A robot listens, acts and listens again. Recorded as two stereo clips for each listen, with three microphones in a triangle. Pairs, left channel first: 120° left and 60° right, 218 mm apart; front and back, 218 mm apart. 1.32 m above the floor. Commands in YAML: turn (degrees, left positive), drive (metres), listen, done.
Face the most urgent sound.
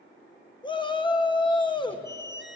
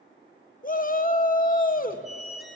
turn: 55
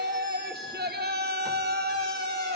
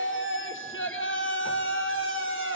turn: -20
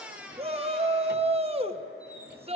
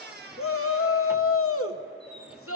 done: "Found it: a shout, straight ahead."